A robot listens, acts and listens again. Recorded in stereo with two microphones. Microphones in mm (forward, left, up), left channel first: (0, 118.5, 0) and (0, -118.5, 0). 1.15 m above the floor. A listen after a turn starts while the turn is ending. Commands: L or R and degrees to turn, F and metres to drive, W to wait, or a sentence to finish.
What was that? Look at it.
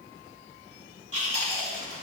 R75
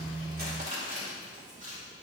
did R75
R35
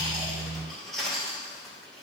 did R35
Found it: chewing, straight ahead.